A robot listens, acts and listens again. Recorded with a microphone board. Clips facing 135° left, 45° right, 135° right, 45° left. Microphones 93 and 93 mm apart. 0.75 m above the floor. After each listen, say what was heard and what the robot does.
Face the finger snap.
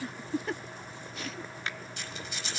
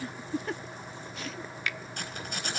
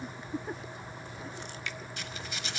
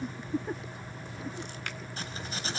The finger snap: 80° left. Turn 80° left.
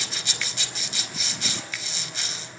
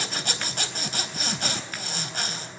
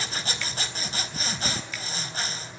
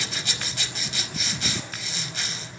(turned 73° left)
Keep listening.
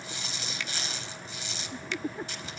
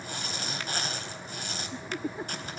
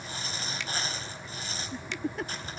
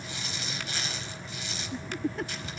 Keep listening.
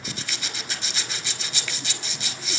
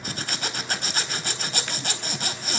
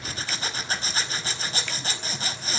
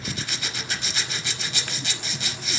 I heard a finger snap from this way, but can't make it out now.